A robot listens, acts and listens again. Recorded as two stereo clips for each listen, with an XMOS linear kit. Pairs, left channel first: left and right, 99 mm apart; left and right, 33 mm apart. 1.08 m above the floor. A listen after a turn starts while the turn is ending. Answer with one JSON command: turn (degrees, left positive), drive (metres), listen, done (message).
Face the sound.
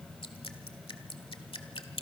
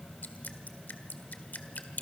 {"turn": 65}
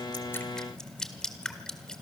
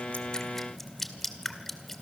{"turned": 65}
{"turn": 10}
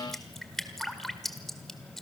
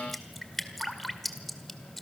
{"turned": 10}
{"done": "Found it: dripping, straight ahead, 1 to 2 m away."}